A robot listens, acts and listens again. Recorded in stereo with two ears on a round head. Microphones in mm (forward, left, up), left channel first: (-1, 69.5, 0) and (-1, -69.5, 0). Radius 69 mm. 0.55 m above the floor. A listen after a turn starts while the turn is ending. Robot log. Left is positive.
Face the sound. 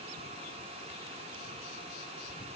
cmd idle
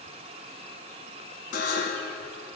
note: The buzzer: about 65° left or 115° left.
cmd yaw +65
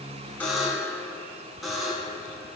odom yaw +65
end: Found it: a buzzer, straight ahead.